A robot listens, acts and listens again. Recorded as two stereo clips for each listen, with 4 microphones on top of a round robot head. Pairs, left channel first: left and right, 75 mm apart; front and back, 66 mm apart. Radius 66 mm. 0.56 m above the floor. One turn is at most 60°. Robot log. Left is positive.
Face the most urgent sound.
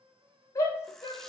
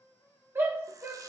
note: The shout: 130° left.
cmd yaw +60
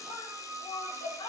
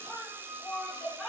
note: The shout is now 85° left.
cmd yaw +60
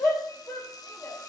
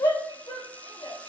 note: The shout is now 20° left.
cmd yaw +20
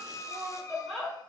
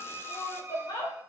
end: Facing the shout, 2 to 4 m away.